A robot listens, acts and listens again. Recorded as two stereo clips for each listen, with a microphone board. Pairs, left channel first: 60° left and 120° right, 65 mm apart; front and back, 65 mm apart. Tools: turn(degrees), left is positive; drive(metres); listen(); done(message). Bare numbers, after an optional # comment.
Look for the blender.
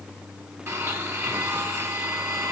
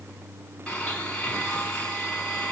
# The blender: 75° right.
turn(-75)
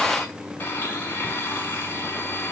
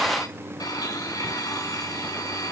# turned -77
done("Facing the blender, over 4 m away.")